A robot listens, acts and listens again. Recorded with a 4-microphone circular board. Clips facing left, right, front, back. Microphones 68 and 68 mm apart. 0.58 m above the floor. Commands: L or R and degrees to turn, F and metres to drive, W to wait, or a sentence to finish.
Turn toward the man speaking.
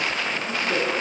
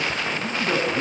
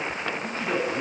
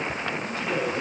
R50
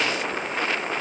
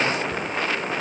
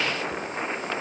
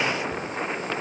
W
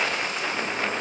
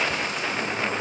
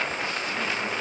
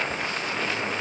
W
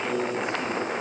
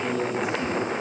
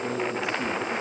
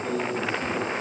Facing the man speaking, over 4 m away.